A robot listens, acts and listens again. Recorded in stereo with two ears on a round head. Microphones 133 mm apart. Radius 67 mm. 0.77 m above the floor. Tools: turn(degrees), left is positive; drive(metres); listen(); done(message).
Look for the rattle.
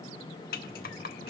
turn(degrees=65)
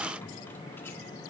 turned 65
listen()
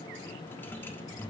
turn(degrees=15)
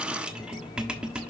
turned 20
done("Facing the rattle.")